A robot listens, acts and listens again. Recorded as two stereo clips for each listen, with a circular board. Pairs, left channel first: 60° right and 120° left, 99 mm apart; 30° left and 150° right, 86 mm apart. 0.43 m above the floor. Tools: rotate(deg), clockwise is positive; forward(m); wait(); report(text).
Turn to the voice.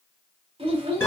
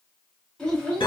rotate(-110)
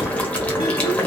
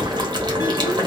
wait()
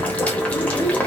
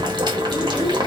wait()
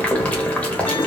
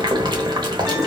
report("Facing where the child speaking came from. I can't hear it now.")